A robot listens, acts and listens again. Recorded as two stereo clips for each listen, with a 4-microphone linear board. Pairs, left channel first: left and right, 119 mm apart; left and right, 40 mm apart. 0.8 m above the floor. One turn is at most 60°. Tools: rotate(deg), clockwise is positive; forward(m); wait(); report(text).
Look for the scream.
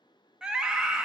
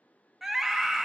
rotate(30)
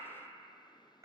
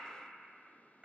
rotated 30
wait()
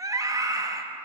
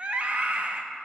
rotate(60)
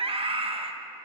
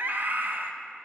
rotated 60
rotate(60)
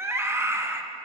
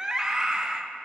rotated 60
rotate(25)
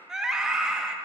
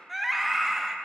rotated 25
report("Found it: a scream, straight ahead, under 1 m away.")